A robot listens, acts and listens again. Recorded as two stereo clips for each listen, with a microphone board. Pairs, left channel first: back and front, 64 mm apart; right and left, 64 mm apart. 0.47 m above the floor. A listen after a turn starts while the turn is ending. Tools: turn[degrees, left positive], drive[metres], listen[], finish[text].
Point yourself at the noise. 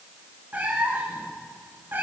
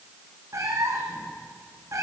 Thought: The cat meowing: 55° left.
Action: turn[55]
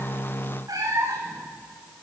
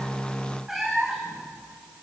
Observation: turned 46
Action: finish[Found it: a cat meowing, straight ahead.]